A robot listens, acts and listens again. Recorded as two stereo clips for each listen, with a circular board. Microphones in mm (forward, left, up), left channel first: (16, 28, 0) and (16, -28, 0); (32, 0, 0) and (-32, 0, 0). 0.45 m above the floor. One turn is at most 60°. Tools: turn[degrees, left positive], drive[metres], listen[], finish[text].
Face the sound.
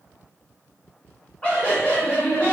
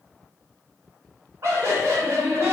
Thought: The laughter: 150° left.
Action: turn[60]
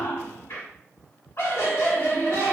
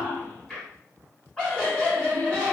Thought: The laughter is now 75° left.
Action: turn[60]
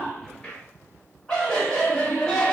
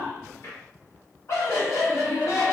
Thought: The laughter is now 15° left.
Action: turn[15]
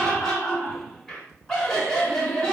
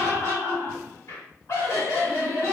Action: finish[Facing the laughter, 1 to 2 m away.]